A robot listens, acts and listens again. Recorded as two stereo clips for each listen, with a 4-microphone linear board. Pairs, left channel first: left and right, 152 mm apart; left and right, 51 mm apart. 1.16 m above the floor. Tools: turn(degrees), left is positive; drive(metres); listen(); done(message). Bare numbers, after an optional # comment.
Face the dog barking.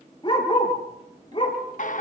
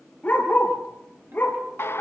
# The dog barking: about 35° left or 145° left.
turn(35)
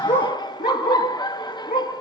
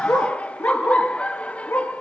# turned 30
# So it is at 105° left.
turn(105)
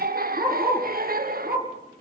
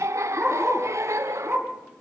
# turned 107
# The dog barking is now 10° right.
turn(-10)
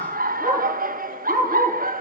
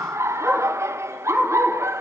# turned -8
done("Facing the dog barking.")